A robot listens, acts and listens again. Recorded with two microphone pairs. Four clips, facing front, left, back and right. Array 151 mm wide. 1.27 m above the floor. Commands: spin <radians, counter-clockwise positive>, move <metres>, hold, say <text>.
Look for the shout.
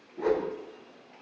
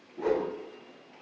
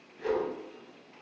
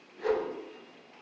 hold
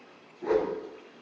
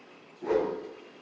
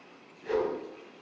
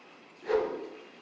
hold
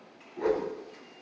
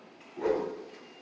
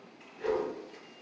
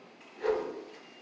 say I can't make out a shout, only a whoosh.